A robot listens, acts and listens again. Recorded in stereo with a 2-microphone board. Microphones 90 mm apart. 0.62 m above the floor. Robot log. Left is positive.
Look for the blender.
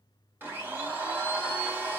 note: The blender: about 25° right or 155° right.
cmd yaw -25
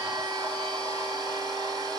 note: So it is at 135° right.
cmd yaw -135
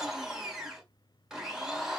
end: Found it: a blender, straight ahead.